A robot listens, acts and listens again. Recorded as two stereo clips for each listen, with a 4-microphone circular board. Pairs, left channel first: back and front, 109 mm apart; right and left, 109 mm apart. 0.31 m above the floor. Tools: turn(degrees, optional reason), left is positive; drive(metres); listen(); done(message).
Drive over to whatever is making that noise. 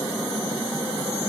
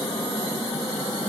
listen()
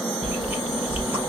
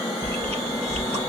turn(degrees=70, reason="The chewing: 70° left.")
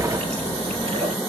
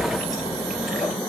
drive(metres=1.0)
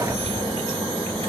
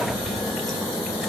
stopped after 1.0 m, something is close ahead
done("Something is in my way. I am facing the chewing but have not reached it.")